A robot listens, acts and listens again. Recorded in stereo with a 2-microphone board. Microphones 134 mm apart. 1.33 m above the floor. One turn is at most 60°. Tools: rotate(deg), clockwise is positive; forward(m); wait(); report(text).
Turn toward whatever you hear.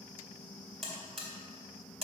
rotate(40)
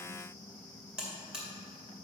report("Facing the buzzer.")